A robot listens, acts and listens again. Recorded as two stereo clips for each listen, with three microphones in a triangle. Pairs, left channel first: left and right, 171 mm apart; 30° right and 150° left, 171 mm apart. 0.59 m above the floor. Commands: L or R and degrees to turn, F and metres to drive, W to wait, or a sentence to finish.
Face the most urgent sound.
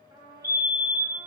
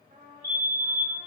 R100
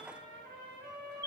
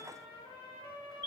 R30
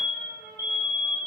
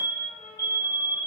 R20
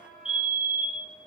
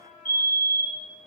Found it: a fire alarm, straight ahead.